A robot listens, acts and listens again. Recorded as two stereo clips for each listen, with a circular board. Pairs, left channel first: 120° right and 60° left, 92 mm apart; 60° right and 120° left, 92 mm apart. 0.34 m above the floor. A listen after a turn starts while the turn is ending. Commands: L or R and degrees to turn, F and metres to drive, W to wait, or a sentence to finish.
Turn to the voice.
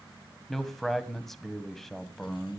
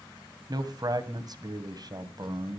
L155
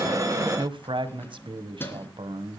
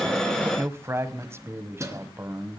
L60
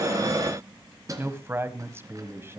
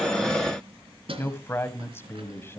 Found it: a man speaking, straight ahead, 1 to 2 m away.